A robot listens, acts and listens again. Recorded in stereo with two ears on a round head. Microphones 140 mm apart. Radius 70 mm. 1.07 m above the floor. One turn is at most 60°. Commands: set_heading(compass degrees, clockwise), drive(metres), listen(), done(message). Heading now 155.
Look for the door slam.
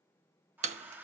set_heading(200)
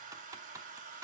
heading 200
listen()
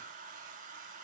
done("I heard a door slam, but can't make it out now. It was about straight ahead or 90° right.")